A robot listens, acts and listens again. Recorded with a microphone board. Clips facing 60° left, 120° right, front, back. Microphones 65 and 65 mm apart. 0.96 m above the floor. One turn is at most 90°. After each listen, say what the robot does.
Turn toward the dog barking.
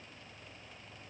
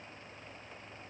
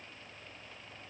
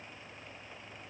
Keep listening.
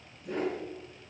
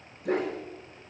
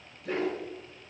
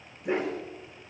Turn 90° right.
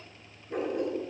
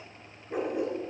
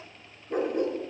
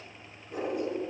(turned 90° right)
Turn 35° right.
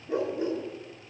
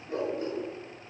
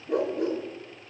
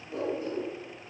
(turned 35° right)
Turn 10° right.
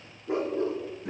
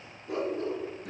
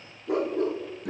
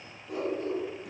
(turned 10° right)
Found it: a dog barking, straight ahead.